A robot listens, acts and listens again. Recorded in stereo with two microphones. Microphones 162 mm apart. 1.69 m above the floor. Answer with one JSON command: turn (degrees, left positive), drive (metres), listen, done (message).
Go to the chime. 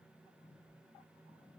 {"listen": true}
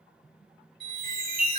{"turn": -65}
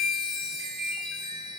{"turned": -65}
{"turn": -20}
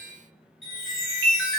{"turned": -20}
{"drive": 1.0}
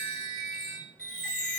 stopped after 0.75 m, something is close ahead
{"done": "I am next to the chime."}